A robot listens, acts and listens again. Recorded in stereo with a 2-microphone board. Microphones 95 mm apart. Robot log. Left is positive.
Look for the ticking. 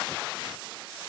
cmd idle
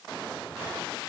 cmd idle
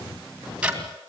cmd yaw -30
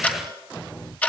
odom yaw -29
note: So it is at 15° left.
cmd yaw +15
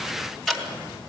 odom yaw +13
end: Found it: ticking, straight ahead, 2 to 4 m away.